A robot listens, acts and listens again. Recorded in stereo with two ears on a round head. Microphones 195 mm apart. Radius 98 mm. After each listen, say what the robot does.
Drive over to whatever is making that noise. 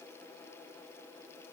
Keep listening.
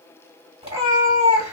Turn 25° right.
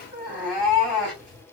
Drive 1.0 m forward.
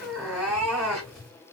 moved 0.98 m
Drive 1.0 m forward.
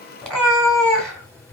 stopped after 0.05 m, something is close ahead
Arrived at the cat meowing, straight ahead.